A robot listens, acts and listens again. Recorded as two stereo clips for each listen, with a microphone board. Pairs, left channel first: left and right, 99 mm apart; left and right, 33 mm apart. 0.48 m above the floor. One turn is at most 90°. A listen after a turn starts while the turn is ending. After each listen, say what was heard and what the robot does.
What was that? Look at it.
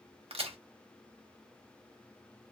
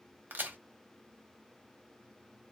Turn 90° right.
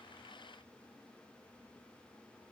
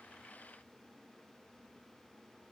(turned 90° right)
I heard a crack from this way, but can't make it out now.